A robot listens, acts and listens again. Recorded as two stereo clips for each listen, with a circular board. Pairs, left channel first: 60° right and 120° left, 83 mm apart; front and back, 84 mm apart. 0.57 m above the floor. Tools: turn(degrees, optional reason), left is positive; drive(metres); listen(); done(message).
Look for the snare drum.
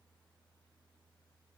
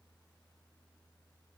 listen()
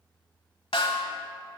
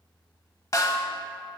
turn(degrees=-50, reason="The snare drum: 50° right.")
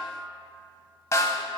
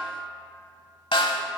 done("Facing the snare drum, under 1 m away.")